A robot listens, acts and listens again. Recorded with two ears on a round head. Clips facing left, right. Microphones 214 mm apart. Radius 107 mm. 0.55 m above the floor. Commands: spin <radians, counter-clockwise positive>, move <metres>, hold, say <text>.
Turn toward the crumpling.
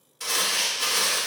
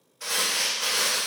spin 0.87
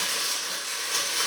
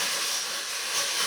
spin 1.13
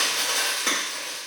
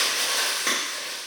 spin 0.26
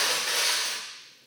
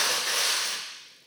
say Facing the crumpling.